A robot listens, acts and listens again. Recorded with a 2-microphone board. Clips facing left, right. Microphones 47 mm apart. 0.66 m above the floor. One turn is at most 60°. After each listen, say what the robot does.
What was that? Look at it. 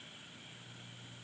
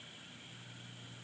Keep listening.
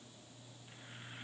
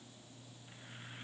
Keep listening.
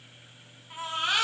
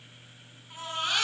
Turn 30° left.
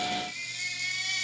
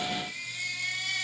Turn 15° right.
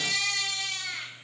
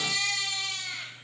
Found it: a baby crying, straight ahead, over 4 m away.